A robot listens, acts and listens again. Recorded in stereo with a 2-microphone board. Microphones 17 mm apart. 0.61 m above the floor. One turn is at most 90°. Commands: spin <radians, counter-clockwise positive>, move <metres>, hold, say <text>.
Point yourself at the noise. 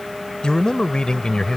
spin 1.05
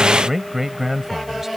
spin -0.17
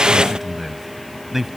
say Facing the man speaking.